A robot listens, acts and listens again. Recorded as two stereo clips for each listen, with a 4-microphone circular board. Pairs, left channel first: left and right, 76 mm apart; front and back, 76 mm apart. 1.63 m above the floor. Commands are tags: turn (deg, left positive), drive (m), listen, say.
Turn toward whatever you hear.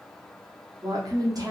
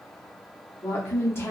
<turn deg="-55"/>
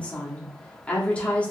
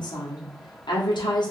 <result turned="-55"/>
<turn deg="15"/>
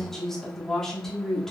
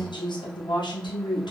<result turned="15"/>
<say>Facing the woman speaking, under 1 m away.</say>